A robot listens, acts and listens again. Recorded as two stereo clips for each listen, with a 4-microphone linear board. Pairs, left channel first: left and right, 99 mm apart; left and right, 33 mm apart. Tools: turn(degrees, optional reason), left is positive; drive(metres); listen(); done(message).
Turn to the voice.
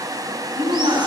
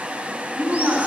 turn(degrees=-90)
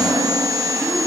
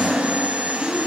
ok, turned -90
done("Facing the woman speaking, over 4 m away.")